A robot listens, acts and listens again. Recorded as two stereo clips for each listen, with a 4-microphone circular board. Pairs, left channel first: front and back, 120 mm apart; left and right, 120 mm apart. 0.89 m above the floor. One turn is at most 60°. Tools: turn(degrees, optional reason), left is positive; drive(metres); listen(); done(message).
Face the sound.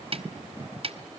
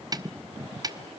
turn(degrees=-60, reason="The snare drum: 145° right.")
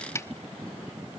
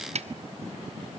turn(degrees=-60, reason="The snare drum is now 65° right.")
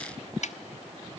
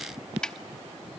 done("Facing the snare drum, under 1 m away.")